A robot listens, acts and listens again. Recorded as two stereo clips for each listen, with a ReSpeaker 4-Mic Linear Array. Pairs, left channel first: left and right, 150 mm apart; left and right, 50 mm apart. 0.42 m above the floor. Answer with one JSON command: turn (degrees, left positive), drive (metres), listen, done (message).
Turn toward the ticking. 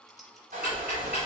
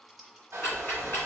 {"turn": 45}
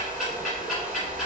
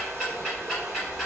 {"done": "Facing the ticking, 1 to 2 m away."}